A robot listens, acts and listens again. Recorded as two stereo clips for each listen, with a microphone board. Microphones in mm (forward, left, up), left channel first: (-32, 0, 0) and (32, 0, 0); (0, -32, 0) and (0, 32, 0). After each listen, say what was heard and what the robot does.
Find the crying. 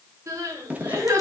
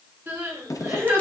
The crying: 35° left. Turn 35° left.
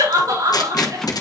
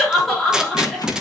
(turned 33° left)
Found it: crying, straight ahead, over 4 m away.